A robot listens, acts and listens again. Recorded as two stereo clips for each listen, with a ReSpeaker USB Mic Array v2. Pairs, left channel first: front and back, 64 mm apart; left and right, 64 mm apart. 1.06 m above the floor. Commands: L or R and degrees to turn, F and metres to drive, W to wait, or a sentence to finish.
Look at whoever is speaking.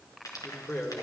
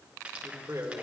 R50
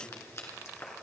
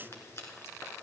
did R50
W
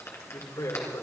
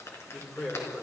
L10
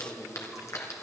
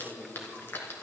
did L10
Found it: a man speaking, straight ahead, 2 to 4 m away.